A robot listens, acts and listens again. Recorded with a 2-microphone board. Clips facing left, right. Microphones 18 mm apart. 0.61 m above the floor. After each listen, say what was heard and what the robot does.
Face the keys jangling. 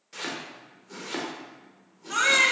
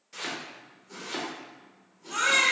Keep listening.
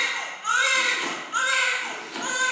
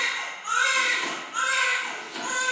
Keep listening.
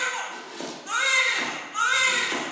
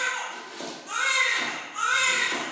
I can't make out keys jangling, only a baby crying and chopping.